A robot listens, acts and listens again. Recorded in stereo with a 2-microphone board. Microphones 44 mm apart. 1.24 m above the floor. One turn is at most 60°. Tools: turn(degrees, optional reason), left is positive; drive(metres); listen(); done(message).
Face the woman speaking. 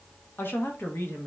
turn(degrees=60, reason="The woman speaking: about 65° left or 115° left.")
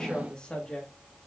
turn(degrees=20, reason="So it is at 20° left.")
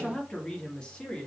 turn(degrees=20, reason="The woman speaking is now 20° left.")
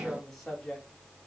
turn(degrees=10, reason="The woman speaking is now 10° left.")
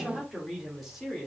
done("Facing the woman speaking.")